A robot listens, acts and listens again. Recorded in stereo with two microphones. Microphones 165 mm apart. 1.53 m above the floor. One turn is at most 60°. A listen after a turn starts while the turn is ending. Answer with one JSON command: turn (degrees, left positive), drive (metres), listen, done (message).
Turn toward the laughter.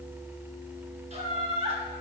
{"turn": -35}
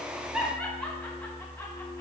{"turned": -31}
{"done": "Facing the laughter."}